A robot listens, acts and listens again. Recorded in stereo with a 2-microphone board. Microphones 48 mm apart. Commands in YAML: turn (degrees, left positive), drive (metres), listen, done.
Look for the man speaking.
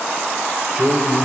turn: -30
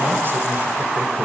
listen: true
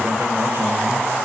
listen: true
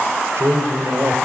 turn: -110
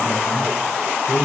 turn: 75
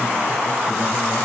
listen: true
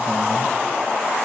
listen: true
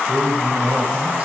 turn: -25
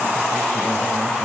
listen: true
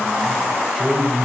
done: "Found it: a man speaking, straight ahead, over 4 m away."